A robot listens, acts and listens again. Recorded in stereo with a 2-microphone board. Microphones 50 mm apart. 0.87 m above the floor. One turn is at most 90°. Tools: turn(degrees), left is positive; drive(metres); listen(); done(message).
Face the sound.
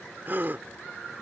turn(degrees=-40)
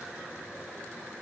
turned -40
listen()
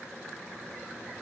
done("I heard a gasp, but can't make it out now. It was about straight ahead or 100° right.")